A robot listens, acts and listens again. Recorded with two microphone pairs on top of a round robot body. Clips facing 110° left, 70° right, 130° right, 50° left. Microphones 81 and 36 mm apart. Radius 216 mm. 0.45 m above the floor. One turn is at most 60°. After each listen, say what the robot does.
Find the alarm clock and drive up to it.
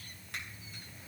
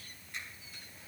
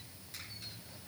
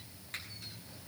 Keep listening.
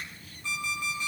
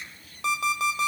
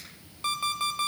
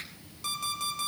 Turn 60° right.
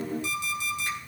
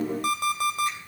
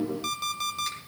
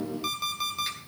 Turn 35° right.
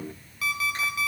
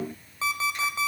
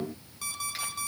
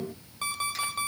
Drive 1.0 m forward.
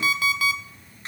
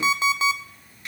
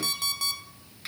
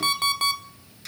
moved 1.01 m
Drive 1.0 m forward.
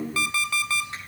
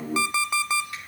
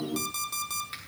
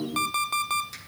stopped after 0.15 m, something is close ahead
I am next to the alarm clock.